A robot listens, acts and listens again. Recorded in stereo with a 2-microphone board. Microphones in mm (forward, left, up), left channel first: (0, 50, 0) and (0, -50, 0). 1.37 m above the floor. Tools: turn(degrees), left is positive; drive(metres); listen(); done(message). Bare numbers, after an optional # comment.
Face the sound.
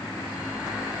listen()
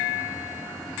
listen()
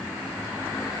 done("I can't make out anything to turn to.")